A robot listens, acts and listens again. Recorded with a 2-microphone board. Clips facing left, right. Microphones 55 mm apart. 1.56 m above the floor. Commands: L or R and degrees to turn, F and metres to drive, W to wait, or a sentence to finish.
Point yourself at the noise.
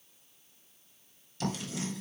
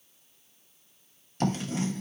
R45
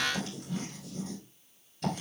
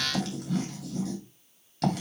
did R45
R90
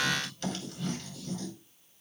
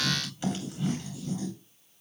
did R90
R15
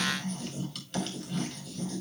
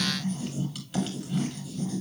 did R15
Facing the writing, 2 to 4 m away.